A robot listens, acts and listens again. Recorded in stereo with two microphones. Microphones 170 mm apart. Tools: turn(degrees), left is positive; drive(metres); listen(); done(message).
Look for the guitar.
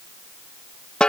listen()
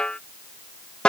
listen()
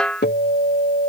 turn(degrees=90)
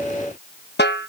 done("Found it: a guitar, straight ahead.")